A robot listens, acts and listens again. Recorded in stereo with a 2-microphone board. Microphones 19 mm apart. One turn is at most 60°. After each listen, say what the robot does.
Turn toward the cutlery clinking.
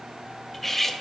Turn 30° left.
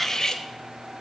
Turn 60° left.
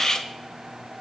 Turn 60° left.
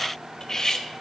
Turn 45° left.
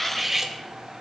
Turn 15° right.
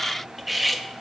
Found it: cutlery clinking, straight ahead.